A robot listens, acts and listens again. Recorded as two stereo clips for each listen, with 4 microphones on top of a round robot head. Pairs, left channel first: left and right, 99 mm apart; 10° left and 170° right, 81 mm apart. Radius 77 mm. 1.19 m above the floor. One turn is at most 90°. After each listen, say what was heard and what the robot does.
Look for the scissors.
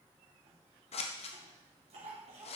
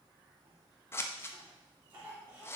The scissors: 70° left. Turn 70° left.
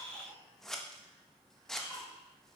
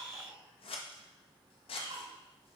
Facing the scissors, 1 to 2 m away.